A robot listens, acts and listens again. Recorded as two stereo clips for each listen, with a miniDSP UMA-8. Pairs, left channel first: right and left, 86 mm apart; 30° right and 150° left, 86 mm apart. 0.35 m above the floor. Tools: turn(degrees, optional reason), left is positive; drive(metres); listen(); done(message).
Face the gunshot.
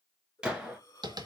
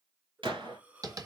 turn(degrees=170, reason="The gunshot: 170° left.")
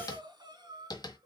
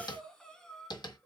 done("Facing where the gunshot came from. I can't hear it now.")